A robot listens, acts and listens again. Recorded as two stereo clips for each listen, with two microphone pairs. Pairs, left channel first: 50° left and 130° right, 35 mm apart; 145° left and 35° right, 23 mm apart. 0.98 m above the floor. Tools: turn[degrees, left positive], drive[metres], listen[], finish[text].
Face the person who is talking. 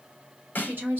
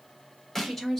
Thought: The woman speaking: 140° right.
Action: turn[-140]
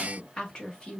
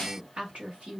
Thought: The woman speaking is now 15° right.
Action: turn[-15]
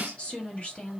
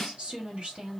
Action: finish[Found it: a woman speaking, straight ahead.]